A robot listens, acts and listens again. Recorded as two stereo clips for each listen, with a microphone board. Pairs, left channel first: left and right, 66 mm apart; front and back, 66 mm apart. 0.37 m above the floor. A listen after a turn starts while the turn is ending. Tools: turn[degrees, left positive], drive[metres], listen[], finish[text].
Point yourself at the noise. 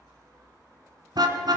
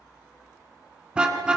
Thought: The car horn: 105° right.
Action: turn[-105]
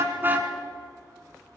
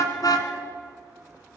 Action: listen[]
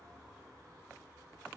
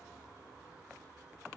Action: listen[]
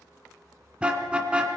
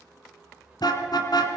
Thought: The car horn is now 15° right.
Action: turn[-15]
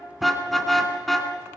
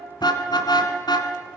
Action: finish[Found it: a car horn, straight ahead.]